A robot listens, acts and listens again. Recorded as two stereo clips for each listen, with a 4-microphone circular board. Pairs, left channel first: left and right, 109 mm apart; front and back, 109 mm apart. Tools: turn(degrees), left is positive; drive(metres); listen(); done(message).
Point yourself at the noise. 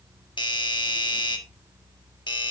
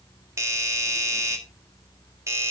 turn(degrees=125)
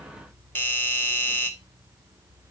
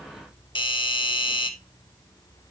turn(degrees=25)
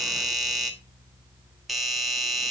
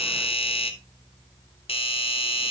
done("Found it: a doorbell, straight ahead.")